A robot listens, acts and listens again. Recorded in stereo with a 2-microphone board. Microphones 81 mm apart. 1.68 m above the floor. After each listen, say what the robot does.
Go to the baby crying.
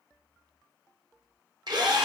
Keep listening.
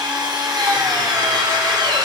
Keep listening.
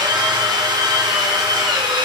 I can't make out a baby crying, only a drill.